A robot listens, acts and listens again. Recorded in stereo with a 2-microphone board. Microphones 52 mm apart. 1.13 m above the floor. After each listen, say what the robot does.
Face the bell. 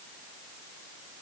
Keep listening.
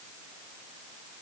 Keep listening.
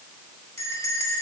Turn 90° left.
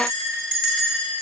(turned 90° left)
Turn 10° left.
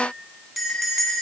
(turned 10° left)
Facing the bell, 2 to 4 m away.